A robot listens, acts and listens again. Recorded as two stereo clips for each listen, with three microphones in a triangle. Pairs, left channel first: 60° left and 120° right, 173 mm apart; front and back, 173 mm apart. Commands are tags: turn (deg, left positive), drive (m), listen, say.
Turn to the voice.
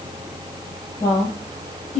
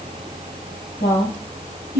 <turn deg="15"/>
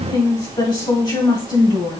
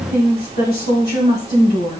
<say>Facing the woman speaking.</say>